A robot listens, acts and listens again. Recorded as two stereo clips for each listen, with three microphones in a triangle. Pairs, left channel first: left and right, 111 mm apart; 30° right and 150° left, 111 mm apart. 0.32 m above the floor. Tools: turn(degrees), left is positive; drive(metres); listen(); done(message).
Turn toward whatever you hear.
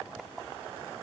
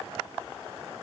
listen()
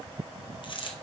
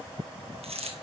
turn(degrees=130)
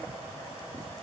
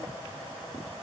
done("Facing where the dropped coin came from. I can't hear it now.")